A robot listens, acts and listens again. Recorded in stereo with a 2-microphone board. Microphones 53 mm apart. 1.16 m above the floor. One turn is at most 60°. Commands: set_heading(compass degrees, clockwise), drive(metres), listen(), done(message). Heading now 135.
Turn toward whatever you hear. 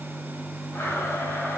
set_heading(85)
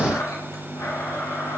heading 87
set_heading(27)
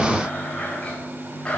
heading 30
set_heading(10)
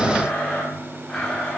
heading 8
done("Found it: a blender, straight ahead, over 4 m away.")